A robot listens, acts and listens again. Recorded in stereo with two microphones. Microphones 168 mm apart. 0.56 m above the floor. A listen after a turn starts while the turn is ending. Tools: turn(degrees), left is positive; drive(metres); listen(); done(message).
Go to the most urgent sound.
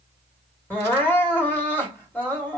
turn(degrees=30)
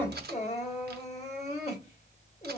turn(degrees=140)
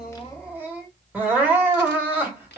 turn(degrees=-10)
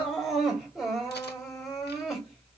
drive(metres=1.0)
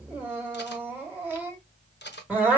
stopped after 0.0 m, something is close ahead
turn(degrees=-10)
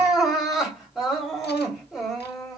done("Blocked. The crying is further on, straight ahead.")